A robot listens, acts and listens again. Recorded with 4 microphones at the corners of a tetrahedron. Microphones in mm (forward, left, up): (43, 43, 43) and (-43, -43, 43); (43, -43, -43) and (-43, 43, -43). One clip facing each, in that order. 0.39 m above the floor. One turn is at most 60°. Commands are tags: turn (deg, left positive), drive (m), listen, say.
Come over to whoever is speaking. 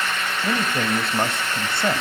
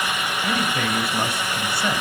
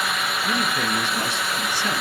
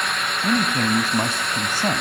<turn deg="60"/>
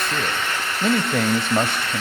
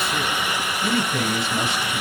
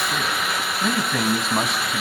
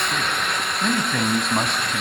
<turn deg="45"/>
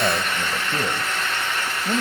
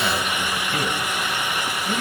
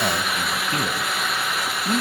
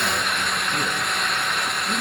<drive m="1.0"/>
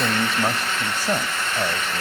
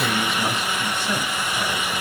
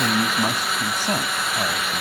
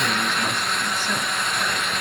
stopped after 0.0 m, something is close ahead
<say>Something is in my way. I am facing the man speaking but have not reached it.</say>